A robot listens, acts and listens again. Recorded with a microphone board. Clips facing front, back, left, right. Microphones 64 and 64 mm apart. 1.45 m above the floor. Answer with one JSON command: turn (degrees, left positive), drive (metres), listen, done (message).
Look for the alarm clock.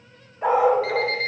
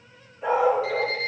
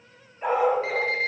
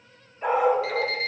{"turn": 30}
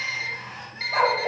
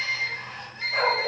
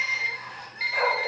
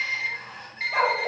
{"done": "Found it: an alarm clock, straight ahead, 2 to 4 m away."}